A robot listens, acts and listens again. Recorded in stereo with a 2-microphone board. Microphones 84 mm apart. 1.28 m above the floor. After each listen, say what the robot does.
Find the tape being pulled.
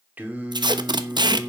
Turn 60° right.
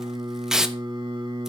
Found it: tape being pulled, straight ahead, under 1 m away.